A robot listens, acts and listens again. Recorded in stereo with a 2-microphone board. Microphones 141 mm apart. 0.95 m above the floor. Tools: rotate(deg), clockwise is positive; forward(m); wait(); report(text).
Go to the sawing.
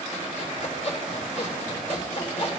rotate(-55)
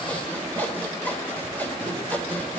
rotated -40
rotate(-15)
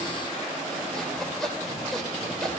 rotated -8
forward(1.0)
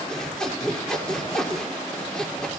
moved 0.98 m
forward(1.0)
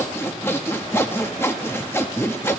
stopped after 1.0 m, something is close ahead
rotate(-20)
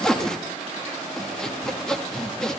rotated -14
report("I am next to the sawing.")